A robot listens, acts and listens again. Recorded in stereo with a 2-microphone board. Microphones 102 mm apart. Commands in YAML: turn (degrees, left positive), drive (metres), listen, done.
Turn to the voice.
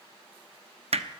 listen: true
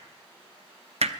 listen: true
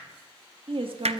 turn: -60
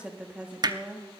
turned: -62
turn: -10
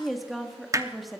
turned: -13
done: "Found it: a woman speaking, straight ahead."